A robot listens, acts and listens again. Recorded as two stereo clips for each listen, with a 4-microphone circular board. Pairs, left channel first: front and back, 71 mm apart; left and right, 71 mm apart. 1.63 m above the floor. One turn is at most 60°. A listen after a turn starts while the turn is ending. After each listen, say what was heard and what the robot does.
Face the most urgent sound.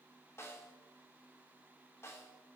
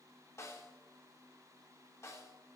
Keep listening.
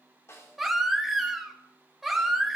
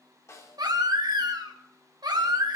The baby crying: 95° right. Turn 60° right.
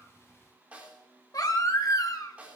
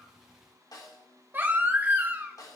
The baby crying is now 30° right. Turn 30° right.
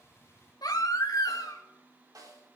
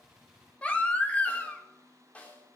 The baby crying is now 20° left. Turn 20° left.
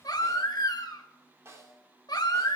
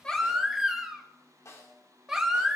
Found it: a baby crying, straight ahead.